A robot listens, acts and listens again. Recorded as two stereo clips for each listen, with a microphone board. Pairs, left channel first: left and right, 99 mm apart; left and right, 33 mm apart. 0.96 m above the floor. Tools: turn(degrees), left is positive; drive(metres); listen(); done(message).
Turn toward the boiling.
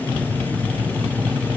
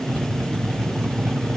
listen()
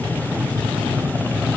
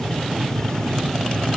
listen()
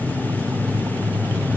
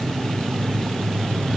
done("I can't make out boiling.")